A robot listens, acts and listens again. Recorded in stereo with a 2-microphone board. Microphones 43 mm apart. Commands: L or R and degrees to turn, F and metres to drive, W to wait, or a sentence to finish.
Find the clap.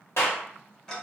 L70
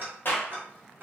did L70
L45
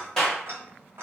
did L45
L10
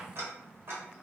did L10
W
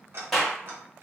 Facing the clap.